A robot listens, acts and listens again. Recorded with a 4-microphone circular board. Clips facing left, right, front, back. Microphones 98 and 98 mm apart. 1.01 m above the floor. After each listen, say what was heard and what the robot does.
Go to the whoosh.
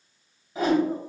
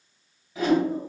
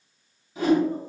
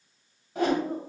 The whoosh: 145° left. Turn 145° left.
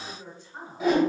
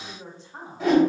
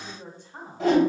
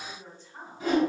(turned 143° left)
Drive 1.0 m forward.
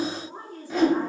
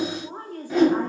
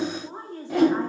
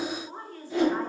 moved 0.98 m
Drive 1.0 m forward.
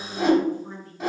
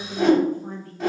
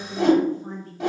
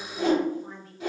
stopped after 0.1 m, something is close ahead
Arrived at the whoosh, straight ahead.